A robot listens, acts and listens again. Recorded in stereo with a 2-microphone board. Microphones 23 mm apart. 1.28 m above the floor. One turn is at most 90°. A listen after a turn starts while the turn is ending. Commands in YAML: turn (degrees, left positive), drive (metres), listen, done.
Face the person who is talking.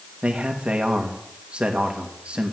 turn: -55
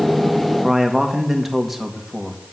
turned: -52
turn: -10
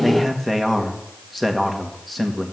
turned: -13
done: "Facing the man speaking."